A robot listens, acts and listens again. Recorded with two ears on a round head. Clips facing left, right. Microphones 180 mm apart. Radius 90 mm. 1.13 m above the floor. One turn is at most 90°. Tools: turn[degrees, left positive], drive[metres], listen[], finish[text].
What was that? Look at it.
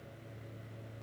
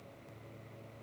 Action: listen[]
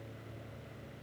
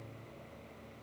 Action: listen[]
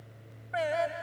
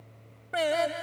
Thought: The singing: about 50° right or 130° right.
Action: turn[-50]
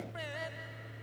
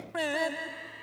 Thought: So it is at 75° right.
Action: turn[-75]
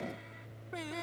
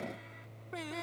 Action: finish[Found it: singing, straight ahead.]